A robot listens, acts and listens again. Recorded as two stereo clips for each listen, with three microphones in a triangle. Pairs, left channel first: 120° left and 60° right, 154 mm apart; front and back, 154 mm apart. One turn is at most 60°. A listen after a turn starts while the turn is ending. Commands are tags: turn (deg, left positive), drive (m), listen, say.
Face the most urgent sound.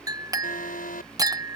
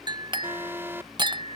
<turn deg="60"/>
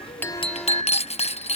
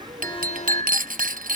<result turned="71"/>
<turn deg="35"/>
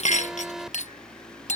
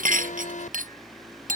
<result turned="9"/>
<turn deg="25"/>
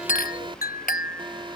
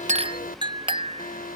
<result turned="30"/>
<say>Facing the alarm.</say>